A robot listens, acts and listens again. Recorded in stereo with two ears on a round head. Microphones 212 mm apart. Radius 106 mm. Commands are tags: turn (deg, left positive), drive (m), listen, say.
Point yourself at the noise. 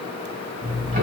<turn deg="-35"/>
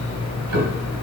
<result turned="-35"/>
<turn deg="-110"/>
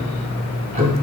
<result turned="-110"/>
<turn deg="-35"/>
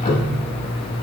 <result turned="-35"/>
<turn deg="25"/>
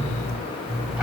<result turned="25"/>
<say>Found it: ticking, straight ahead, 1 to 2 m away.</say>